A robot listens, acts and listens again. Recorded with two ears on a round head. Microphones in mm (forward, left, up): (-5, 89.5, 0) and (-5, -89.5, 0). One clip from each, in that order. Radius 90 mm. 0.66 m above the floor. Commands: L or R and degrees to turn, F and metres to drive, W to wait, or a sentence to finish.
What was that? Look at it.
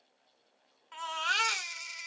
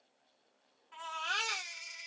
L50
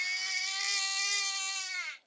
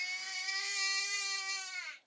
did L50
L80
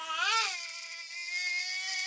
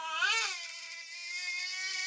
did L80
L15
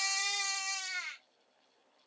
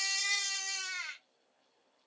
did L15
Found it: a baby crying, straight ahead.